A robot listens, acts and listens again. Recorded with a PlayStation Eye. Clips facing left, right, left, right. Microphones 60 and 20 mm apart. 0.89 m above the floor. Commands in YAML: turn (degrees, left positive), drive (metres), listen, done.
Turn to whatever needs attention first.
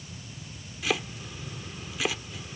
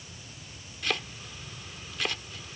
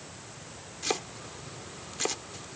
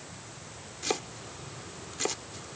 listen: true
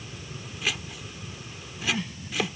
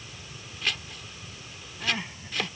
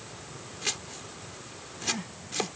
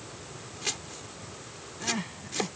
turn: -25
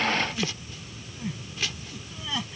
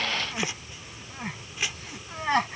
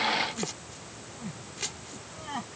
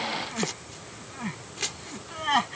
turn: -130
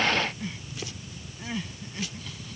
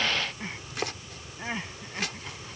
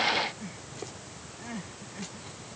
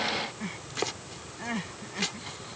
turn: -35
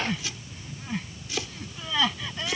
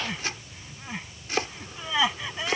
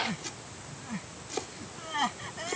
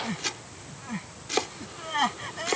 turn: -15
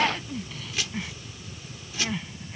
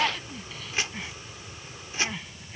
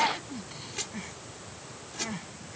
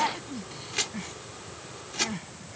done: "Facing the crying."